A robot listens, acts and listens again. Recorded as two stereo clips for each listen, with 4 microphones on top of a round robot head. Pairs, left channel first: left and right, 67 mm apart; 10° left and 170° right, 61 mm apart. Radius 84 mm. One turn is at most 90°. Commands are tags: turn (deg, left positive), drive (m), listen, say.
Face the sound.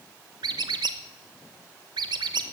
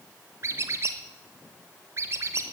<turn deg="-90"/>
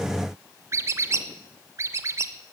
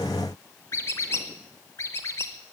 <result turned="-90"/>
<turn deg="-40"/>
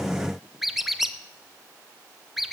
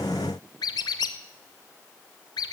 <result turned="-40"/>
<say>Found it: a squeak, straight ahead.</say>